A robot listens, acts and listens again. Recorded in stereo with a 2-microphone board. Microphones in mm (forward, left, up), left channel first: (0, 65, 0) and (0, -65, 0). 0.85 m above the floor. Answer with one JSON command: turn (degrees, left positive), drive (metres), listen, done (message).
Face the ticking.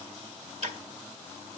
{"turn": -65}
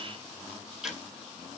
{"done": "Found it: ticking, straight ahead, 1 to 2 m away."}